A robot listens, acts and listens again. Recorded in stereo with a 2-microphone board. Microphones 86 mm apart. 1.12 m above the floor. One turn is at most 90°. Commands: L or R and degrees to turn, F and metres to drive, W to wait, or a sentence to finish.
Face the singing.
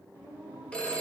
L30
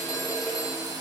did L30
W
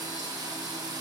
W
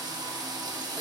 I heard singing, but can't make it out now. It was about straight ahead or 120° left.